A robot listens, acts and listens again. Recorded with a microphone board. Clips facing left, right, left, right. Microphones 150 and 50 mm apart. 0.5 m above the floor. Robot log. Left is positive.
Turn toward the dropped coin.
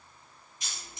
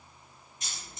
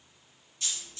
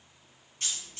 note: The dropped coin: about 50° right or 130° right.
cmd yaw -50
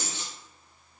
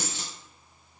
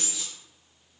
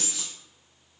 note: So it is at 80° right.
cmd yaw -80
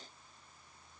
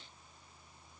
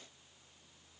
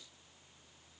end: I heard a dropped coin from this way, but can't make it out now.